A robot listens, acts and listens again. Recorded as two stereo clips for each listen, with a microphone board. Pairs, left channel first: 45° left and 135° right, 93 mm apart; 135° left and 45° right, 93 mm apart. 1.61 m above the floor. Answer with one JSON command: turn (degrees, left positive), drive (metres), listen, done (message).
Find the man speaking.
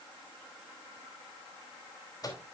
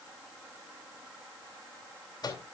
{"listen": true}
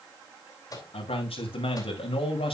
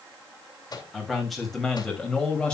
{"turn": 55}
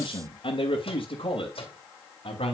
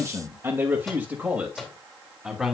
{"turn": 40}
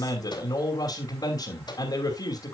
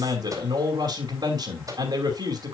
{"done": "Found it: a man speaking, straight ahead, 2 to 4 m away."}